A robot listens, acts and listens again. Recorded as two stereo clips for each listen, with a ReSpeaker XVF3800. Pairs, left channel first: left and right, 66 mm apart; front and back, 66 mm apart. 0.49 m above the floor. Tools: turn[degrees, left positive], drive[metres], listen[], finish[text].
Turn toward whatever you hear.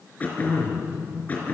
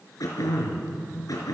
Thought: The throat clearing: 25° left.
Action: turn[25]
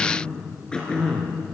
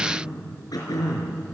Thought: The throat clearing is now 10° left.
Action: turn[10]
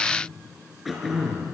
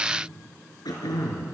Action: finish[Found it: throat clearing, straight ahead, over 4 m away.]